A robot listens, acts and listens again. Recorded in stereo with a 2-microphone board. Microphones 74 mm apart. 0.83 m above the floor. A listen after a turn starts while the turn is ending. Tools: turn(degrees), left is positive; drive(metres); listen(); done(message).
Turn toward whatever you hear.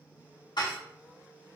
turn(degrees=70)
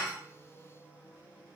listen()
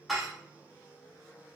done("Found it: dishes clattering, straight ahead.")